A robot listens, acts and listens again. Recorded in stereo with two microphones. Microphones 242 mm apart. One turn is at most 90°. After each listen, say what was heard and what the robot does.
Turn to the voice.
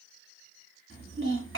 The child speaking: about 55° right or 125° right. Turn 55° right.
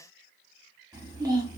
So it is at 20° right. Turn 20° right.
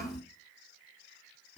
Found it: a child speaking, straight ahead.